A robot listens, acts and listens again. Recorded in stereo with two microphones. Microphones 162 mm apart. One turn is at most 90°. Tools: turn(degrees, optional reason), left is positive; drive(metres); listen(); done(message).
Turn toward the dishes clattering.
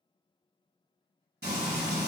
listen()
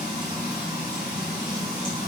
listen()
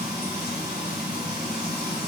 done("I can't make out dishes clattering, only frying.")